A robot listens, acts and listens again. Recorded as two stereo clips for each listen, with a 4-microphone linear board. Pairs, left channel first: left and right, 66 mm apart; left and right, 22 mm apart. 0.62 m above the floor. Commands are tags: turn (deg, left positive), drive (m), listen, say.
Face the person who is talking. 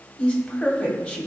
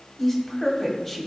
<turn deg="25"/>
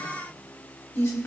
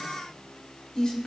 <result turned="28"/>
<turn deg="125"/>
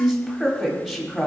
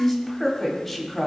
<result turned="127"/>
<say>Found it: a woman speaking, straight ahead.</say>